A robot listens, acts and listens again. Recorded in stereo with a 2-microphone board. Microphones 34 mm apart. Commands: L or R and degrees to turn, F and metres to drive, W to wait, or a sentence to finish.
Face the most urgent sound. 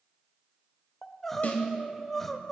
L30
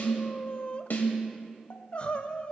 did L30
L140
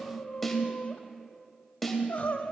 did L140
L55
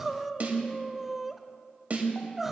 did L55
R10
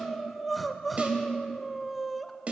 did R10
Facing the crying.